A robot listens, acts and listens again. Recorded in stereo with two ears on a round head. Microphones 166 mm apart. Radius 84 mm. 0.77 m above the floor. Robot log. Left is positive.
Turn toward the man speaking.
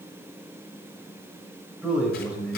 cmd yaw -30
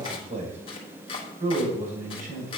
note: So it is at 130° right.
cmd yaw -130
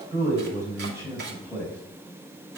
note: The man speaking is now 10° right.
cmd yaw -10
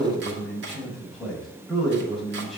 end: Found it: a man speaking, straight ahead.